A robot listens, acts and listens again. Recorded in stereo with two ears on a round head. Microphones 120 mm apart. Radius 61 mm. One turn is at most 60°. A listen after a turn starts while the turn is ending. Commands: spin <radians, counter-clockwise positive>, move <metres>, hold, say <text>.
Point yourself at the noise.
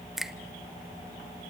spin 0.52
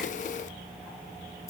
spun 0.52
spin 1.05
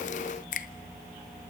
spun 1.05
spin 1.05
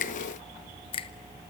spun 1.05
spin 0.79
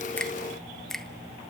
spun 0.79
say Facing the finger snap.